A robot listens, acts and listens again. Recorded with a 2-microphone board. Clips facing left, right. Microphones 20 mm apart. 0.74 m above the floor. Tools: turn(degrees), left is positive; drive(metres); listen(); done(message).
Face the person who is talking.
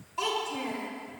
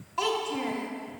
turn(degrees=-20)
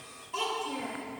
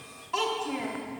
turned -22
turn(degrees=-140)
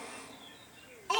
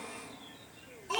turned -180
turn(degrees=40)
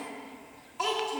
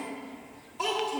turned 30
turn(degrees=15)
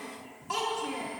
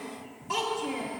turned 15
done("Facing the child speaking, 1 to 2 m away.")